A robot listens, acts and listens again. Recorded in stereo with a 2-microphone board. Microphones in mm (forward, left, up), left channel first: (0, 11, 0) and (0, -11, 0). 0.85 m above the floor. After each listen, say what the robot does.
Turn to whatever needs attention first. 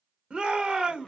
Turn 40° right.
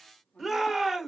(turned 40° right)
Facing the shout.